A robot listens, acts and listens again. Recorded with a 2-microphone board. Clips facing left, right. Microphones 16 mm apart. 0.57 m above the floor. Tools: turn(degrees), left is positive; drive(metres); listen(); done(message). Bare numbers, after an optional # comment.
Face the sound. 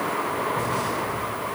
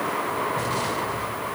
# The explosion: about 50° right or 130° right.
turn(-50)
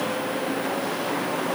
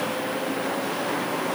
listen()
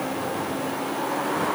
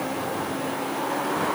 done("I heard an explosion, but can't make it out now. It was about straight ahead or 80° right.")